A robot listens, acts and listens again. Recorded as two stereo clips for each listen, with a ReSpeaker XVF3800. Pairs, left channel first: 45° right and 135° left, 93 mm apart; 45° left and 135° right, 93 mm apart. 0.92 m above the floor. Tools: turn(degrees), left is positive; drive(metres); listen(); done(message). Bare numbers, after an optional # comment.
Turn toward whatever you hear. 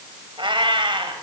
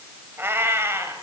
# The cat meowing: 165° left.
turn(165)
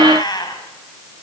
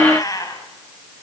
done("Found it: a cat meowing, straight ahead.")